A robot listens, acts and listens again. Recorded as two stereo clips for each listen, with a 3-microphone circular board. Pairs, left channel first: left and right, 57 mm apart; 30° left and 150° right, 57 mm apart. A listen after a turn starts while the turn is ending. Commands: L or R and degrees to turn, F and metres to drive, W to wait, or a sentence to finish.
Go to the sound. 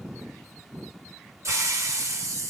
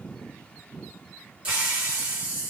R85
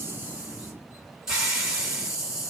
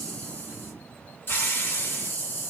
R15
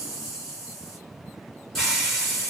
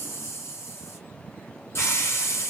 F1.0
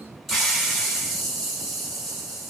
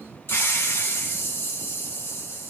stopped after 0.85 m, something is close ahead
Arrived at the hiss, straight ahead.